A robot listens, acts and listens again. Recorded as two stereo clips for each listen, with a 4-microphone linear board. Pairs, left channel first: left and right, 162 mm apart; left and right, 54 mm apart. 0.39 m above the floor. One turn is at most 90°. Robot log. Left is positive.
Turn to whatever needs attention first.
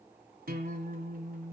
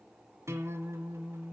cmd idle
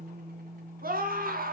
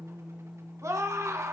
note: The scream: about 65° right or 115° right.
cmd yaw -65
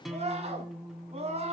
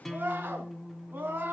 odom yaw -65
note: So it is at 40° right.
cmd yaw -40
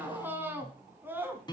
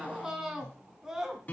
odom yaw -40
note: The scream is now 15° right.
cmd yaw -15
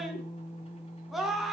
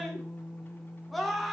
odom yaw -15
end: Found it: a scream, straight ahead.